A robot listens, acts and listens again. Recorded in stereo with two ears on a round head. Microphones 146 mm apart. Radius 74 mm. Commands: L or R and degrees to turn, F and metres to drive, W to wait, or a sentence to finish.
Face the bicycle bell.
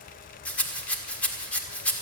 W
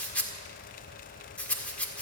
W
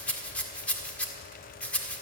I can't make out a bicycle bell to turn to.